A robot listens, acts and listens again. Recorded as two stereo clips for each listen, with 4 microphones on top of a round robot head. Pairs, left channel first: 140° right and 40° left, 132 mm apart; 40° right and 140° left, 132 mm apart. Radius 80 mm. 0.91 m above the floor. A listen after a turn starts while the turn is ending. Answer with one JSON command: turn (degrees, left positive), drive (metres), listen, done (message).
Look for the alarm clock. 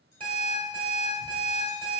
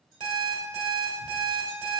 {"turn": 90}
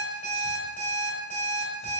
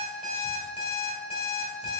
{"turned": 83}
{"done": "Facing the alarm clock, 1 to 2 m away."}